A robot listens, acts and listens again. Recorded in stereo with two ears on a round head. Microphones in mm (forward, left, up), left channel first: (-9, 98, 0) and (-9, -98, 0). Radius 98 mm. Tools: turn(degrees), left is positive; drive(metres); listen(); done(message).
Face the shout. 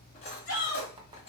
turn(degrees=55)
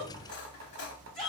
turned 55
done("Found it: a shout, straight ahead.")